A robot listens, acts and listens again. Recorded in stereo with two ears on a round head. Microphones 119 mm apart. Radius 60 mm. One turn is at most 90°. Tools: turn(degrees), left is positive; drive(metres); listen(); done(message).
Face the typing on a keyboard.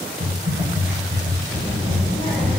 turn(degrees=-35)
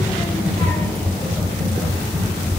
done("Found it: typing on a keyboard, straight ahead, 1 to 2 m away.")